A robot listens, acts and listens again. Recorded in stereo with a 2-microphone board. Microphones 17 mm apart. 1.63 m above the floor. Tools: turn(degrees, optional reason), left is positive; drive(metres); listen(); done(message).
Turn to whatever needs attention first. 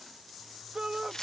turn(degrees=-50, reason="The shout: about 50° right or 130° right.")
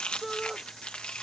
done("Found it: a shout, straight ahead.")